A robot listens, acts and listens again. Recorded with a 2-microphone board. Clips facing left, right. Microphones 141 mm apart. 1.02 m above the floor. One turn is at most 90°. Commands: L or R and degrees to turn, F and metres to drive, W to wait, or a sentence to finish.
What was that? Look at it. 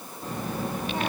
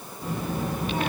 R30
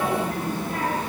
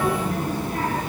R90
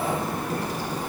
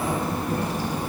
R20
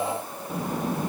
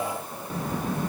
L35
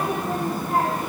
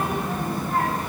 L15
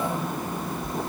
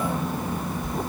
Found it: a child speaking, straight ahead, 1 to 2 m away.